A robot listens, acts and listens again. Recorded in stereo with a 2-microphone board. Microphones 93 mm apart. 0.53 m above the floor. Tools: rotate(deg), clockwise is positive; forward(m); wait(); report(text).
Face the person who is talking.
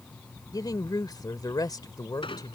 rotate(-45)
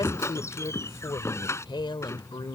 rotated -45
rotate(-85)
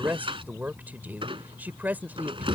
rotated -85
rotate(20)
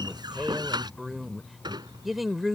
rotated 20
report("Found it: a woman speaking, straight ahead.")